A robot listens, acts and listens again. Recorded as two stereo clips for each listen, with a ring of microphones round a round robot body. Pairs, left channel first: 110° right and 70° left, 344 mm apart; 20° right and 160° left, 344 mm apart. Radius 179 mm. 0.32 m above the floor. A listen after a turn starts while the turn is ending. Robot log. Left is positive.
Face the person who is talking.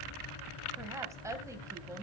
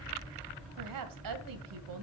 note: The woman speaking: 150° left.
cmd yaw +150
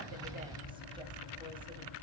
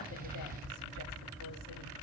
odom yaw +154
cmd idle
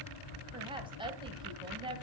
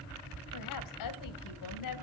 end: Facing the woman speaking, 2 to 4 m away.